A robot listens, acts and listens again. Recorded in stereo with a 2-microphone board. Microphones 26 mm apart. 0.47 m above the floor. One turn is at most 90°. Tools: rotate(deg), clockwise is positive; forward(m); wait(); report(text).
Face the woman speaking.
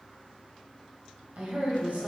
rotate(65)
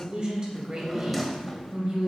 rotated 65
rotate(40)
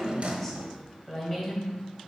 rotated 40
rotate(-10)
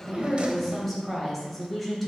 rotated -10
report("Found it: a woman speaking, straight ahead.")